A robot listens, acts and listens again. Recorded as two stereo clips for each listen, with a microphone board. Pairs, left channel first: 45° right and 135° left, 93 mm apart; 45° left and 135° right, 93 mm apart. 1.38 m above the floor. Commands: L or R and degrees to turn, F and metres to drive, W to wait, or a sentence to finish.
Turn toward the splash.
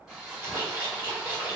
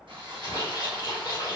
L75
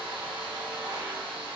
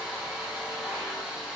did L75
I heard a splash from this way, but can't make it out now.